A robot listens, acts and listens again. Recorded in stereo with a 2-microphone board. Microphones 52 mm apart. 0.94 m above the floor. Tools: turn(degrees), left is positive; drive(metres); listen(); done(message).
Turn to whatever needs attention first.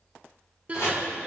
turn(degrees=-30)
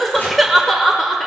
done("Facing the crying, 1 to 2 m away.")